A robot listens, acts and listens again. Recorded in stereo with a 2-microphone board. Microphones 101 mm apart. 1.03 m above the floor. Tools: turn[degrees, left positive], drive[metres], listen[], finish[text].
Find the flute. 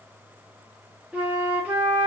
Action: turn[-30]
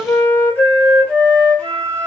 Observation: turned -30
Thought: So it is at 15° left.
Action: turn[15]
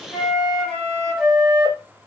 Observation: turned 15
Action: finish[Facing the flute, under 1 m away.]